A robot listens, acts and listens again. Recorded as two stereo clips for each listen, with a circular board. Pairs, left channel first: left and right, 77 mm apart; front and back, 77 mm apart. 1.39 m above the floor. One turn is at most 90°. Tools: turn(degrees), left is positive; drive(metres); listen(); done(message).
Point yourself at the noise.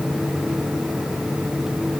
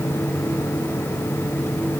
listen()
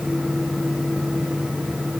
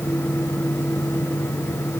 listen()
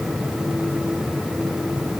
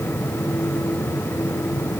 done("I can't make out anything.")